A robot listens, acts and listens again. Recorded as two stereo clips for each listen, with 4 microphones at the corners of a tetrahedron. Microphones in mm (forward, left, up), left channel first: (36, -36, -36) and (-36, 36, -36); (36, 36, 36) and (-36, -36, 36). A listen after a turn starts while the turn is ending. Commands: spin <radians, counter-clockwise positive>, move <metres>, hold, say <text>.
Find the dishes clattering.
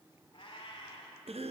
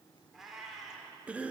hold
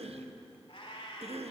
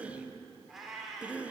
hold
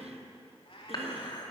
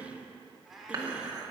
spin -1.48
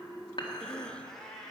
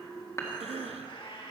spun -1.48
say Facing the dishes clattering.